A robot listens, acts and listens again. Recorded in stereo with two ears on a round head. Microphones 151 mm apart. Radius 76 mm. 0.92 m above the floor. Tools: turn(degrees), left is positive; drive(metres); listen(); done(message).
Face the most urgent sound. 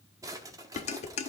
listen()
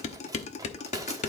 listen()
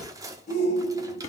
turn(degrees=45)
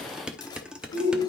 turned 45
turn(degrees=90)
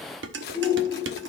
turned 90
done("Facing the shout.")